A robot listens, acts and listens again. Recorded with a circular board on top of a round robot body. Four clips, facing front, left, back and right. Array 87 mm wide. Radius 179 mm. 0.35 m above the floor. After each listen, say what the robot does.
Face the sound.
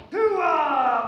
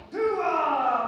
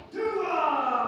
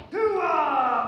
Turn 30° right.
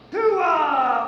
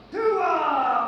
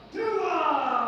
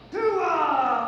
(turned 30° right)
Turn 10° right.
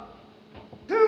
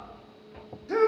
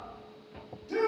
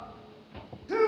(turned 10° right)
Facing the shout.